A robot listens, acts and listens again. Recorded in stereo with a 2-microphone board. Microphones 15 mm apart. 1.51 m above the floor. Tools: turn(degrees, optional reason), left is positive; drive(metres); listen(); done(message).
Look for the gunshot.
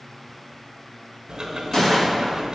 turn(degrees=45, reason="The gunshot: about 45° left or 135° left.")
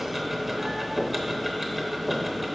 listen()
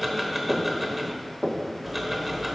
done("I heard a gunshot, but can't make it out now. It was about straight ahead or 90° left.")